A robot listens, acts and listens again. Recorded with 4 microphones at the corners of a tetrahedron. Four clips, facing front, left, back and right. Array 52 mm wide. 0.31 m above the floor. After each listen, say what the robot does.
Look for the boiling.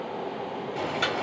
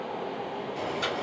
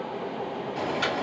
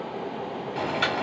Turn 75° right.
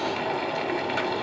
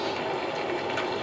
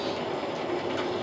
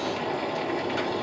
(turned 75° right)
Turn 15° left.
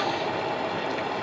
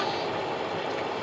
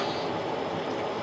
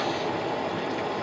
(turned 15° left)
Facing the boiling, 1 to 2 m away.